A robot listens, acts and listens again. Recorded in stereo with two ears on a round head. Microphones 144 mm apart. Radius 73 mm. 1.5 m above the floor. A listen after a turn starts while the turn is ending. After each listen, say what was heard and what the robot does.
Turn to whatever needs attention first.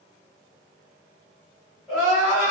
Turn 30° right.
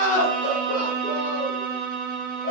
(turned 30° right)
So it is at 25° left. Turn 25° left.
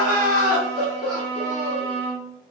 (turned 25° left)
Found it: crying, straight ahead.